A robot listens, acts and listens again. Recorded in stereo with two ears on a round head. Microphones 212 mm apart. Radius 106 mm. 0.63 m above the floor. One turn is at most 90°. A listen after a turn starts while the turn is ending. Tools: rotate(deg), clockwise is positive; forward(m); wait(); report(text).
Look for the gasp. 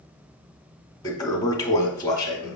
wait()
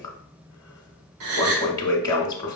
rotate(65)
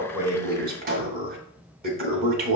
wait()
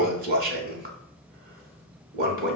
report("I heard a gasp, but can't make it out now. It was about straight ahead or 50° right.")